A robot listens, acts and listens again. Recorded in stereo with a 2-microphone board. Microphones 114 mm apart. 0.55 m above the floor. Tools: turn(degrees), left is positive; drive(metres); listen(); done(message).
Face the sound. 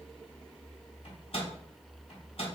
turn(degrees=55)
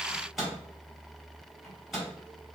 done("Found it: a microwave, straight ahead.")